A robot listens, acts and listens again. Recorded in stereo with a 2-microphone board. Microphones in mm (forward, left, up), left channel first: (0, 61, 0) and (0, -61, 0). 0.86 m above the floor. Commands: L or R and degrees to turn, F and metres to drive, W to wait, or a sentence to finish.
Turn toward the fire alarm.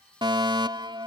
R40
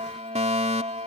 R95
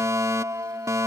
R25
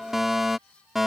Facing the fire alarm.